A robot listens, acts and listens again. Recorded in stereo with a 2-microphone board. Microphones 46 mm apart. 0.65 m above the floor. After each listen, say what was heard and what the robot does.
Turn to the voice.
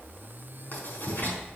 Keep listening.
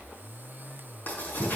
Keep listening.
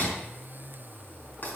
I can't make out anyone speaking, only writing.